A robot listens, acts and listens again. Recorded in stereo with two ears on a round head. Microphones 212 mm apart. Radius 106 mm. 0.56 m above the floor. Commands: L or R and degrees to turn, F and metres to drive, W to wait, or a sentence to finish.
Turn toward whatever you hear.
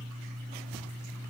W
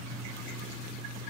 W
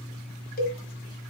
L40
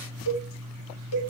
L100
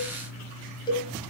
L20
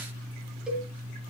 Found it: a cowbell, straight ahead, 1 to 2 m away.